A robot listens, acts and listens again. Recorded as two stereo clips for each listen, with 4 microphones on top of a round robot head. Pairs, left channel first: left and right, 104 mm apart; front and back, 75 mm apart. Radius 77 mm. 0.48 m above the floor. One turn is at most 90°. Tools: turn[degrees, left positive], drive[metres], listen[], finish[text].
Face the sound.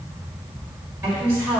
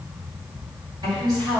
Thought: The woman speaking: 160° right.
Action: turn[-90]
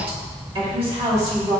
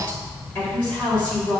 Thought: The woman speaking is now 75° right.
Action: turn[-75]
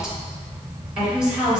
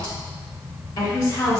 Thought: The woman speaking is now 10° right.
Action: turn[-10]
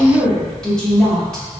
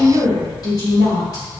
Action: finish[Facing the woman speaking, 2 to 4 m away.]